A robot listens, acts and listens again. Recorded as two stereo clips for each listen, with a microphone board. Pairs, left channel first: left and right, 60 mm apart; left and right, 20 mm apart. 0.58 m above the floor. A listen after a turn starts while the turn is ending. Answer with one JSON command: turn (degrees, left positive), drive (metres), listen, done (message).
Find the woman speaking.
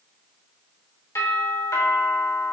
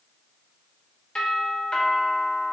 {"listen": true}
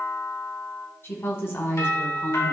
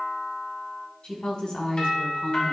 {"turn": 45}
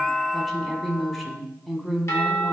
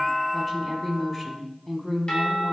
{"done": "Facing the woman speaking."}